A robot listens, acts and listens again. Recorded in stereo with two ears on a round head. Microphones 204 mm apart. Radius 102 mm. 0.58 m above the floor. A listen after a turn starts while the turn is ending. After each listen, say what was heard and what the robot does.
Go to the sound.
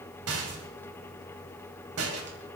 The rattle: about 70° right or 110° right. Turn 70° right.
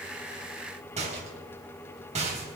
So it is at 30° right. Turn 30° right.
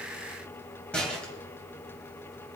Drive 1.0 m forward.
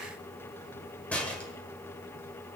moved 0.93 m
Drive 1.0 m forward.
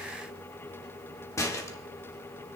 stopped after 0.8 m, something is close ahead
The rattle is now 15° left. Turn 15° left.
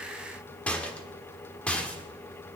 I am next to the rattle.